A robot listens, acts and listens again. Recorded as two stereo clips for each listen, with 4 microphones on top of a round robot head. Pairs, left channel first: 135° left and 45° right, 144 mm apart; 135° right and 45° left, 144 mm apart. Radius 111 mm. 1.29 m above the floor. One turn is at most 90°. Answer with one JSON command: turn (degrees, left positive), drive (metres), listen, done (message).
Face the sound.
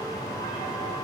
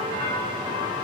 {"listen": true}
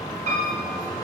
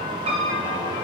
{"done": "Facing the piano, 1 to 2 m away."}